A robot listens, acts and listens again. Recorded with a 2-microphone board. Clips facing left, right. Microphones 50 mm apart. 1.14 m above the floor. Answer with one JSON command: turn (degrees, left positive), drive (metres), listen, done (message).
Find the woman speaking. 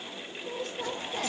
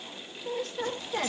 {"turn": -90}
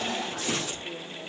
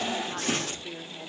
{"turn": -35}
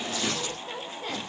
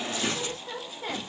{"turn": -15}
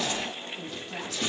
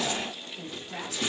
{"turn": -10}
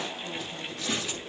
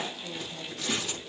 {"listen": true}
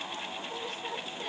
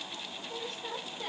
{"done": "Facing the woman speaking, 2 to 4 m away."}